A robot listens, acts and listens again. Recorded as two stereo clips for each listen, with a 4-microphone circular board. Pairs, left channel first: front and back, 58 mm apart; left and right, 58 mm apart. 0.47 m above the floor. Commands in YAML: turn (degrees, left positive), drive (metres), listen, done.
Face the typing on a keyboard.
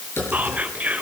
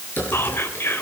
turn: 40
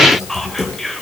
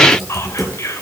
done: "Found it: typing on a keyboard, straight ahead, over 4 m away."